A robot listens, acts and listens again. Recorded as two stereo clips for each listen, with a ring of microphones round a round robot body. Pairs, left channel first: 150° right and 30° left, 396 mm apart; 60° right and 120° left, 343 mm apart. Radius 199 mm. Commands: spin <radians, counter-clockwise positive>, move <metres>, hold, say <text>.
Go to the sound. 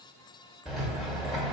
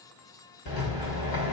spin -1.05
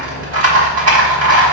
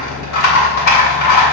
spin -0.44
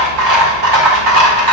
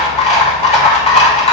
spin 0.17
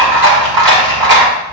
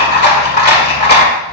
move 1.0
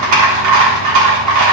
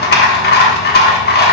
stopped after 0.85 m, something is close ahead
say I am next to the rattle.